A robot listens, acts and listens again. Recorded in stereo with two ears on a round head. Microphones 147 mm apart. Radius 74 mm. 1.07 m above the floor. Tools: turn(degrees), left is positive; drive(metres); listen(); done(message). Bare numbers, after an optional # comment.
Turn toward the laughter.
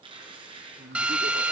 # The laughter: about 70° right or 110° right.
turn(-70)
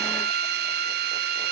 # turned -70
listen()
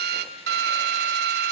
listen()
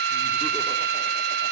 done("I heard laughter, but can't make it out now. It was about straight ahead or 40° right.")